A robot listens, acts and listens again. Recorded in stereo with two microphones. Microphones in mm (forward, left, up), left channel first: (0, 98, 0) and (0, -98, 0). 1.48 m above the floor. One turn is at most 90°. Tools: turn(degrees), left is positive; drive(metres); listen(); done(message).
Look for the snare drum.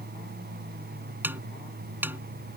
turn(degrees=-30)
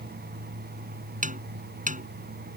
turn(degrees=-90)
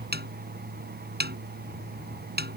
turn(degrees=-55)
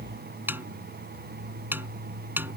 turn(degrees=-10)
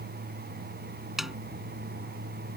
done("Facing the snare drum.")